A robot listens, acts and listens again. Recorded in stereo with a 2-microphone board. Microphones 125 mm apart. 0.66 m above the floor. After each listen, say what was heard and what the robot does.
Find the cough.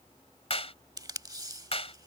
Keep listening.
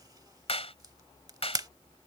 Keep listening.
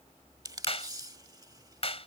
I can't make out a cough to turn to.